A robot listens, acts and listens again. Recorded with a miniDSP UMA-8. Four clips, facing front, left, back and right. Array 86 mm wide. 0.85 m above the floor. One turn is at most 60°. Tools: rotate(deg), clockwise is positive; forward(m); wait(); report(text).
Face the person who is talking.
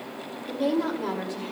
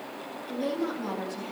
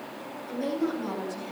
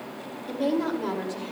rotate(40)
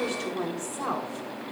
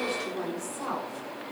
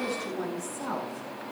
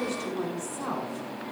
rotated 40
report("Facing the woman speaking, 2 to 4 m away.")